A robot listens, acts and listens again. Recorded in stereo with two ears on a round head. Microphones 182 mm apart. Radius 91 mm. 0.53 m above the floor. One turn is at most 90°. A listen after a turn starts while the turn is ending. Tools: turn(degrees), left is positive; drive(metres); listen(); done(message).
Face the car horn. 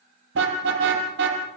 turn(degrees=-55)
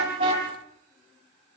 listen()
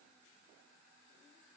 listen()
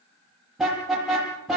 done("Found it: a car horn, straight ahead.")